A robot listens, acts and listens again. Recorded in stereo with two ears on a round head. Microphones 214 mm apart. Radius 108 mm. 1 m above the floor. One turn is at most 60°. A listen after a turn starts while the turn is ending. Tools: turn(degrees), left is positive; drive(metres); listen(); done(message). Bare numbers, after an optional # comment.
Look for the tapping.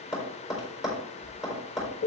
turn(30)
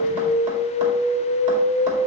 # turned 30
listen()
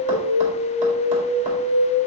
listen()
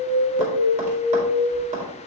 # So it is at 30° right.
turn(-30)
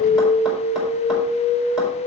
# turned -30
listen()
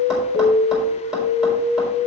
listen()
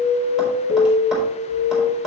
done("Facing the tapping.")